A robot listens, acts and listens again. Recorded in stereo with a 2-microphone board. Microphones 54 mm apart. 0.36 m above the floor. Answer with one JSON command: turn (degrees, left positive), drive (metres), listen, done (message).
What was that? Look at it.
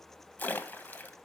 {"turn": 35}
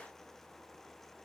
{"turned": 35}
{"listen": true}
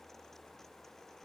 {"done": "I heard a splash, but can't make it out now. It was about straight ahead or 110° left."}